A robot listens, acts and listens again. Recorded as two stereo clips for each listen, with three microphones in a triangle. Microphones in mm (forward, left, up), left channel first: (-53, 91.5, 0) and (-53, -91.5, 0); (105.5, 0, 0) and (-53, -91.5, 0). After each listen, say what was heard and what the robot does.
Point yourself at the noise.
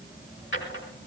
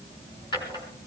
The drawer: 95° left. Turn 95° left.
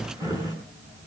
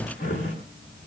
The drawer is now 20° right. Turn 20° right.
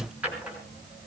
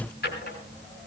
Facing the drawer.